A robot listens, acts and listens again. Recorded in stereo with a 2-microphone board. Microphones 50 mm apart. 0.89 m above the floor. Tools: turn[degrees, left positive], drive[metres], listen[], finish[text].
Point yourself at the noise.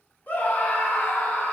Thought: The scream: about 35° left or 145° left.
Action: turn[35]
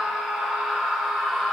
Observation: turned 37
Action: finish[Found it: a scream, straight ahead.]